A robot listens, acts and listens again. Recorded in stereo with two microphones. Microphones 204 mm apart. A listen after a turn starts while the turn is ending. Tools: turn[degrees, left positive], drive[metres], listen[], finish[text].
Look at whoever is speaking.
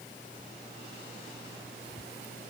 Action: listen[]
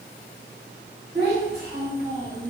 Thought: The child speaking: about 35° right or 145° right.
Action: turn[-35]
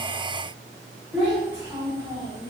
Action: finish[Found it: a child speaking, straight ahead, 1 to 2 m away.]